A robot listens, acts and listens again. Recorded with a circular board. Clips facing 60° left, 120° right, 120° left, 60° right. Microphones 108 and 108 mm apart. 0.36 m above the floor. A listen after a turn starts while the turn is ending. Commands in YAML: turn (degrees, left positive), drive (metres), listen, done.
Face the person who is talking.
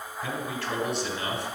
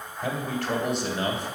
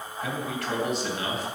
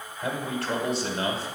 turn: -105
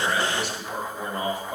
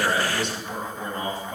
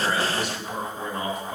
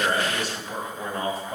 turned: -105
turn: -10
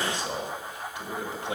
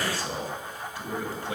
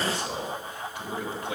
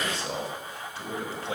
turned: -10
done: "Found it: a man speaking, straight ahead, 1 to 2 m away."